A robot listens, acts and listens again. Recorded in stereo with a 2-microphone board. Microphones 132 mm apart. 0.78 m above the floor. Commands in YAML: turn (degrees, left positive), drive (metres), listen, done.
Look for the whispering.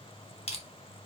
listen: true
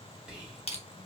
turn: -30
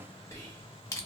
turn: 25
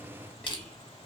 done: "Found it: whispering, straight ahead, 1 to 2 m away."